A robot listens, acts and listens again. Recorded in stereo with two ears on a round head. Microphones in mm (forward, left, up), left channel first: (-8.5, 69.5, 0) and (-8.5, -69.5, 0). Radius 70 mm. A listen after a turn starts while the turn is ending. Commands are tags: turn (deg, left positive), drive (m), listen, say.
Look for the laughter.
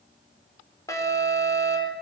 <listen/>
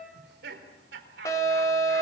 <turn deg="-90"/>
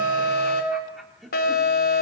<say>Found it: laughter, straight ahead.</say>